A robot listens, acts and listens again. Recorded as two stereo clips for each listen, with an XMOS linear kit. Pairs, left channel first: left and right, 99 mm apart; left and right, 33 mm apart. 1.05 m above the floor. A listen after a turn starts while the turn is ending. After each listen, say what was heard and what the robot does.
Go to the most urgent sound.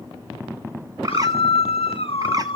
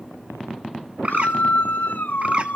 Turn 90° left.
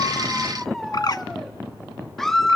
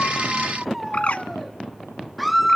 Drive 1.0 m forward.
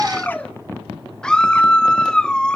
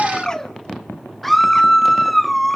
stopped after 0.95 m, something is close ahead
The scream is now 10° left. Turn 10° left.
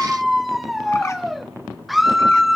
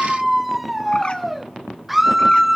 Arrived at the scream, straight ahead.